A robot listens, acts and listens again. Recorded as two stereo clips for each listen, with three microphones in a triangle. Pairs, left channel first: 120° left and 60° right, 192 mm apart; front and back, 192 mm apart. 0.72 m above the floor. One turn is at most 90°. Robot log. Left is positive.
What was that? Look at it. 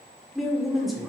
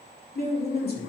note: The woman speaking: 30° left.
cmd yaw +30
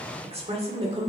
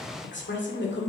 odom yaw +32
end: Found it: a woman speaking, straight ahead.